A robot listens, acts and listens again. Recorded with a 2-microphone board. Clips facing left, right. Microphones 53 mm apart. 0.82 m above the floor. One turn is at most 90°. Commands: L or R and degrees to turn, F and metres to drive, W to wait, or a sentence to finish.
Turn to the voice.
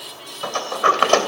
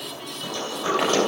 W
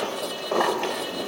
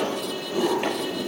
W
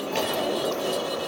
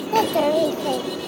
R65
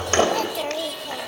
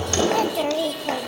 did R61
R10
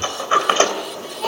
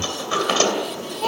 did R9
Facing the child speaking, 1 to 2 m away.